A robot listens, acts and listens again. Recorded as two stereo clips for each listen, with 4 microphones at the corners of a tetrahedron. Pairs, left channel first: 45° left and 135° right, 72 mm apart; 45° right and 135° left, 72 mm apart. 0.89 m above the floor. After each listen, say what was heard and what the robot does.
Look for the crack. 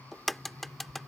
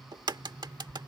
The crack: 130° left. Turn 130° left.
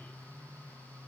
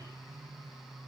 Facing where the crack came from. I can't hear it now.